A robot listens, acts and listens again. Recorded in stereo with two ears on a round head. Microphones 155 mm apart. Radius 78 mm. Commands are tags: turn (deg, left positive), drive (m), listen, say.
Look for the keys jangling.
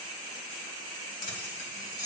<turn deg="55"/>
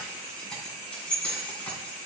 <turn deg="10"/>
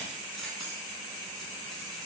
<listen/>
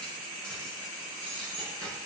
<say>Found it: keys jangling, straight ahead.</say>